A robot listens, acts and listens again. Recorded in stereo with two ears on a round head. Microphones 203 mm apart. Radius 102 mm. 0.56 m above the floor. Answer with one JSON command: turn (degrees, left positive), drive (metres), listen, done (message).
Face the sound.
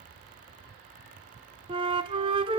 {"turn": -25}
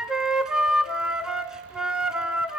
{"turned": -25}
{"done": "Facing the flute, 1 to 2 m away."}